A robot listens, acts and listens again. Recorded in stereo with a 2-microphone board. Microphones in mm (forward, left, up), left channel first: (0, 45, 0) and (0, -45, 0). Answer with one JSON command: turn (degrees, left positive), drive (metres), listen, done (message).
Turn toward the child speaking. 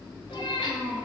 {"turn": -30}
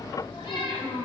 {"turn": 25}
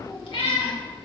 {"listen": true}
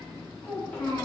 {"turn": 20}
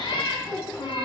{"done": "Found it: a child speaking, straight ahead, 2 to 4 m away."}